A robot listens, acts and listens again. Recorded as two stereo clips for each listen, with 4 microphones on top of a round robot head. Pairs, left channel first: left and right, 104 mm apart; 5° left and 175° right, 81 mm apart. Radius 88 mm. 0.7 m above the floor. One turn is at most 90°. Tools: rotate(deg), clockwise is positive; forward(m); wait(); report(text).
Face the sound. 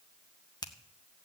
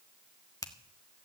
rotate(-45)
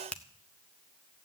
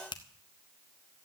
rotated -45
rotate(-10)
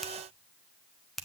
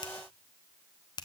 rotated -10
report("Facing the finger snap.")